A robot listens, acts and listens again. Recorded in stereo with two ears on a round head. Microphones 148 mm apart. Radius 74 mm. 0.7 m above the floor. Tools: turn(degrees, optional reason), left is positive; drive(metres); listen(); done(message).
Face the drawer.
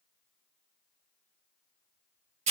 listen()
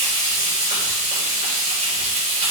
listen()
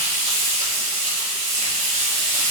done("I can't make out a drawer, only frying.")